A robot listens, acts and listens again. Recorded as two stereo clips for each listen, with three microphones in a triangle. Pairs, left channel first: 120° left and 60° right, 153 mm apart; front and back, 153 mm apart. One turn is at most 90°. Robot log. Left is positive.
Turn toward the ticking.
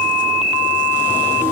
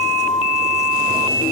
cmd idle
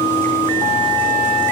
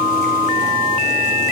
cmd idle
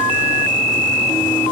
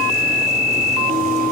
end: I can't make out ticking.